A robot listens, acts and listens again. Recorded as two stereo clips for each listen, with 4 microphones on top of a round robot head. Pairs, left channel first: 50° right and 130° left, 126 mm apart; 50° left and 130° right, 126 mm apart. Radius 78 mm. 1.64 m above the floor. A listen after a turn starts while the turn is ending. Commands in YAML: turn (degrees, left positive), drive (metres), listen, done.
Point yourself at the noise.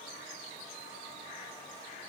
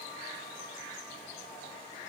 listen: true
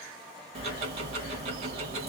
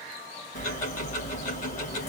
turn: 80
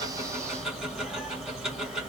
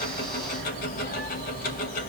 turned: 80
turn: 40
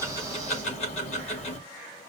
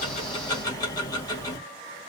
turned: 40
turn: -10
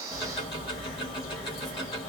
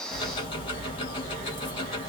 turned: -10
done: "Facing the ticking."